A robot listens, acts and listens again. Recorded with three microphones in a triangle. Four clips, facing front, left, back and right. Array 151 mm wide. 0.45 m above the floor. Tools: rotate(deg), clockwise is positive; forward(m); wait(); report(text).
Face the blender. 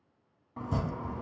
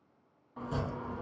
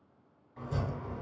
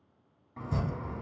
wait()
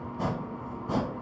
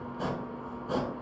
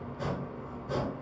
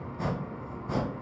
wait()
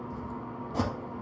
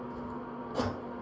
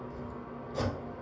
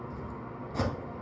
report("I can't make out a blender to turn to.")